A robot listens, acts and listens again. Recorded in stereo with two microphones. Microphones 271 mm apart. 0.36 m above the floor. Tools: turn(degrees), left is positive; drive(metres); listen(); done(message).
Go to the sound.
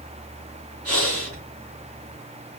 turn(degrees=-60)
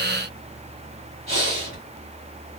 turn(degrees=-50)
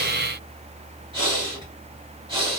turn(degrees=-20)
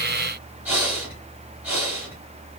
drive(metres=1.0)
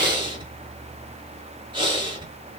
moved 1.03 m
turn(degrees=-20)
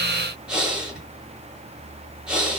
drive(metres=1.0)
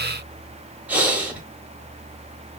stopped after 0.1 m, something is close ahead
done("I am next to the breathing.")